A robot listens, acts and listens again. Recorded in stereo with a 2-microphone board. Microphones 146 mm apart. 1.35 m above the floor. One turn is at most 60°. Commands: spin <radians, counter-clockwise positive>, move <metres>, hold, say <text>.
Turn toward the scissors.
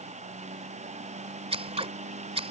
spin -0.79
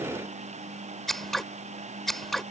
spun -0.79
say Found it: scissors, straight ahead.